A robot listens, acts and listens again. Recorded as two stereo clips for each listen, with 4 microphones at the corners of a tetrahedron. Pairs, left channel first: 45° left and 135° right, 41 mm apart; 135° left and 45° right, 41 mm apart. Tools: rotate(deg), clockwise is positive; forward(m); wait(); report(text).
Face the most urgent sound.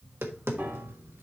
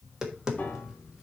wait()
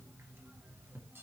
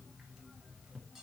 wait()
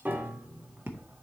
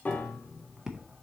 report("I can't make out anything urgent to turn to.")